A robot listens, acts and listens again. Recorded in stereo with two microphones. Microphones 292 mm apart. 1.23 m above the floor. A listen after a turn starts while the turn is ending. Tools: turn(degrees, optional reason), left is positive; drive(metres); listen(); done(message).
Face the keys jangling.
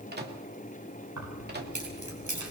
turn(degrees=-90)
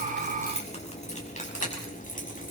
turn(degrees=30, reason="So it is at 30° left.")
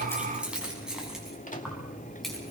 done("Found it: keys jangling, straight ahead, over 4 m away.")